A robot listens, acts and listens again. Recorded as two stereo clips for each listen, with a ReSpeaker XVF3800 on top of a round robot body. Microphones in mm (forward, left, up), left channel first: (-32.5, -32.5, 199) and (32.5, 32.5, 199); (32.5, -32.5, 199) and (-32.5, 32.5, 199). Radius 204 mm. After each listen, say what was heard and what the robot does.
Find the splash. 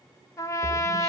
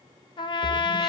The splash: 45° right. Turn 45° right.
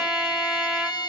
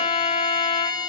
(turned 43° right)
I heard a splash from this way, but can't make it out now.